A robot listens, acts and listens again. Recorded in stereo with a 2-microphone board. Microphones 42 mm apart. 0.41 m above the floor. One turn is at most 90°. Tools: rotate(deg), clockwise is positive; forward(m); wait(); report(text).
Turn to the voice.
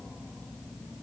wait()
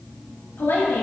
rotate(-65)
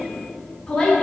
rotate(-10)
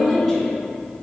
report("Found it: a woman speaking, straight ahead.")